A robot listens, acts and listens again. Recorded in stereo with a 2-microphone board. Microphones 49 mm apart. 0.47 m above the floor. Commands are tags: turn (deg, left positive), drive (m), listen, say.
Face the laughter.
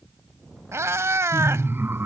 <turn deg="-50"/>
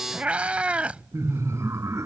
<turn deg="-80"/>
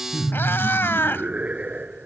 <turn deg="-30"/>
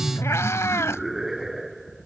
<say>Found it: laughter, straight ahead.</say>